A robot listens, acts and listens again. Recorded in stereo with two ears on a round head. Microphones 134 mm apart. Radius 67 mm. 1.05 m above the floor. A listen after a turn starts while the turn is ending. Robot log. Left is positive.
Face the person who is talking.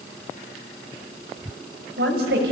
cmd yaw -90
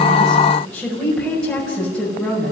end: Facing the woman speaking, over 4 m away.